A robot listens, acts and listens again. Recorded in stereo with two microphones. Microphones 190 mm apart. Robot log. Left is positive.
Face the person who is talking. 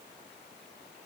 cmd idle
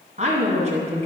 note: The woman speaking: about 40° right or 140° right.
cmd yaw -40
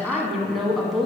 end: Facing the woman speaking.